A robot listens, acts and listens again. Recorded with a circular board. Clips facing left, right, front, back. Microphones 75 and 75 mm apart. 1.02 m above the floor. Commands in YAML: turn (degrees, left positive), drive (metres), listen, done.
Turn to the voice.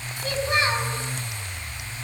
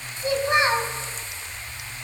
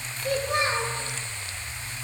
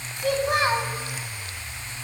turn: -160
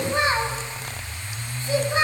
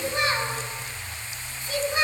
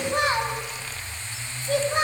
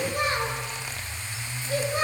turn: 30
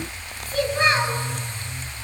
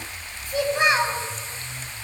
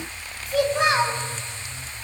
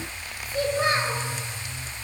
turn: -15
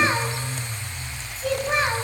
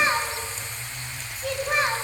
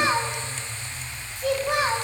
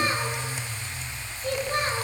done: "Facing the child speaking, over 4 m away."